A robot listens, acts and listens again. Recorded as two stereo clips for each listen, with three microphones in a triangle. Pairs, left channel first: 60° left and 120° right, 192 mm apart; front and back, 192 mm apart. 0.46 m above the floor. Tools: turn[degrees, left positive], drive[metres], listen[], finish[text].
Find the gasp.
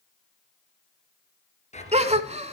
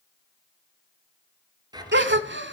Thought: The gasp: 170° right.
Action: turn[-170]
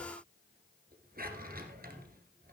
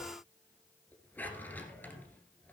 Action: finish[I heard a gasp from this way, but can't make it out now.]